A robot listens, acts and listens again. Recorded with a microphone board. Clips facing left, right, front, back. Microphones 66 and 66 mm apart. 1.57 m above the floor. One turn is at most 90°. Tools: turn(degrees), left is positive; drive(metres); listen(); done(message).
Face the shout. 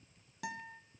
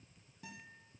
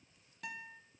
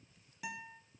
listen()
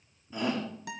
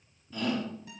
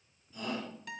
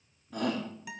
turn(degrees=90)
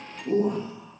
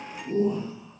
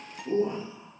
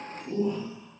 turn(degrees=65)
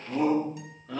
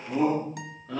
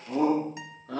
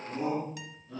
done("Facing the shout, over 4 m away.")